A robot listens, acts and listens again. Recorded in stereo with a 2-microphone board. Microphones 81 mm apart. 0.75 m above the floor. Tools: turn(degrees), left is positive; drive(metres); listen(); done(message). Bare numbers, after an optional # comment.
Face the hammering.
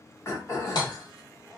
# The hammering: about 75° left or 105° left.
turn(75)
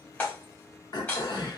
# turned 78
# So it is at 20° left.
turn(20)
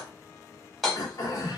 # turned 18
done("Facing the hammering.")